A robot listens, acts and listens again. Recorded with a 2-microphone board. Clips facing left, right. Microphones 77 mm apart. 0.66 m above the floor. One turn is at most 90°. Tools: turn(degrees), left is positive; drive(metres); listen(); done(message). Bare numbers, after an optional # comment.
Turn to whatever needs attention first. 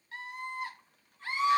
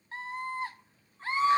# The scream: about 30° right or 150° right.
turn(-30)
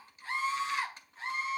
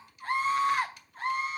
# So it is at 110° right.
turn(-90)
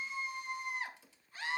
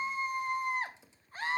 # The scream is now 50° right.
turn(-50)
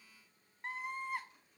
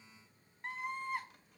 done("Facing the scream.")